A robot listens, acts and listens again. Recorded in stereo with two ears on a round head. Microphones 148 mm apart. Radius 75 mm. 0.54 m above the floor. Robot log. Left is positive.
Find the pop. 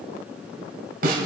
cmd idle
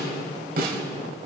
cmd idle
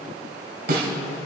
end: I can't make out a pop, only a snare drum.